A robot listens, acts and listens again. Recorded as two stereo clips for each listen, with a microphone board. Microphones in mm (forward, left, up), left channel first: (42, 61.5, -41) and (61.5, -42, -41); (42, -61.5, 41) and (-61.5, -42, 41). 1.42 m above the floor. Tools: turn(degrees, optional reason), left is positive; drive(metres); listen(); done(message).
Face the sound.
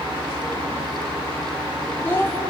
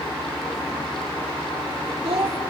turn(degrees=165, reason="The child speaking: 165° left.")
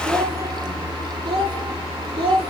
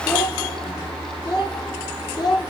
turn(degrees=-55, reason="The child speaking is now 55° right.")
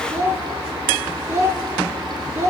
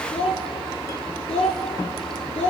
turn(degrees=-20, reason="The child speaking is now 20° right.")
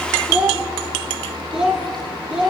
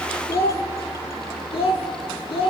done("Facing the child speaking.")